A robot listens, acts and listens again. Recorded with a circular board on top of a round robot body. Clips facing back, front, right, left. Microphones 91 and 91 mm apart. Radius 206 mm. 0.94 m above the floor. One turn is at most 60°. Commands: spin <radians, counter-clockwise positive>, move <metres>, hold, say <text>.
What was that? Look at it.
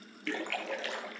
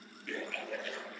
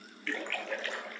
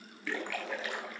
spin 1.05
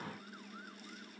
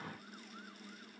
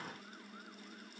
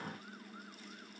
spin 1.05
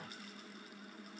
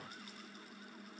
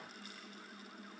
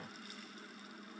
spin 0.87
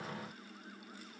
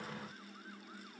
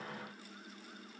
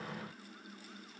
say Facing where the splash came from. I can't hear it now.